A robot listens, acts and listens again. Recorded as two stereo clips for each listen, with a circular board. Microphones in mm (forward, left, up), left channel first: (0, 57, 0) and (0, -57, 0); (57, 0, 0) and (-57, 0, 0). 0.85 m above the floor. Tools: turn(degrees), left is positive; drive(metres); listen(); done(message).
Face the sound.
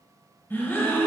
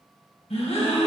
turn(degrees=20)
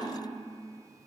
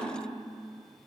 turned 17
done("I heard a gasp from this way, but can't make it out now.")